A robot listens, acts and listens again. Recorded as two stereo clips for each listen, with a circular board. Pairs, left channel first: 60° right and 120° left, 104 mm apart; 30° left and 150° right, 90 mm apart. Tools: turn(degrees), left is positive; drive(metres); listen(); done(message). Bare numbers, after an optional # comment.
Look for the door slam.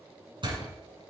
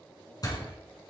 # The door slam: 75° left.
turn(75)
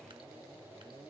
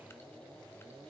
done("Facing where the door slam came from. I can't hear it now.")